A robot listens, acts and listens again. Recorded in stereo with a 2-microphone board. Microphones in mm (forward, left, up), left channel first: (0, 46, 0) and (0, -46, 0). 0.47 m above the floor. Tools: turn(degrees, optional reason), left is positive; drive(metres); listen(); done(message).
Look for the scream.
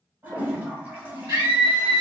turn(degrees=-60, reason="The scream: about 60° right or 120° right.")
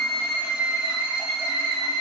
turn(degrees=-35, reason="So it is at 35° right.")
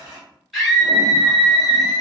done("Found it: a scream, straight ahead.")